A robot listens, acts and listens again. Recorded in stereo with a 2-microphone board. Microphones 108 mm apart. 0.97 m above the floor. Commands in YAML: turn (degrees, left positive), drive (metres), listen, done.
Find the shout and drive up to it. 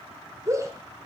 turn: -30
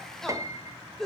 drive: 1.0
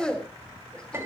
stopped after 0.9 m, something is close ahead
done: "Blocked. The shout is further on, straight ahead."